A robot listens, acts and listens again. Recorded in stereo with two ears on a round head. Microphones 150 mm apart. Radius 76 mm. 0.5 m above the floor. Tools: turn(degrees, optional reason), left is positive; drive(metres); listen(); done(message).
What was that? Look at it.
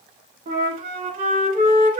turn(degrees=-50, reason="The flute: about 50° right or 130° right.")
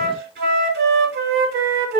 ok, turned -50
turn(degrees=-75, reason="So it is at 75° right.")
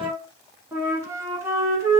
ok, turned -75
turn(degrees=-20, reason="The flute is now 20° right.")
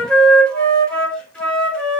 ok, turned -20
done("Facing the flute.")